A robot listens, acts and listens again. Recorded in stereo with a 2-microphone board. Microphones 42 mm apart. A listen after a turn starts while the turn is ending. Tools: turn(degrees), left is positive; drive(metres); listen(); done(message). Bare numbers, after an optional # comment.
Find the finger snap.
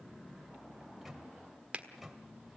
# The finger snap: about 30° right or 150° right.
turn(-30)
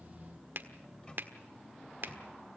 # So it is at 115° right.
turn(-115)
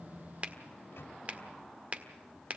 # The finger snap is now 40° right.
turn(-40)
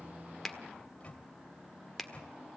done("Facing the finger snap.")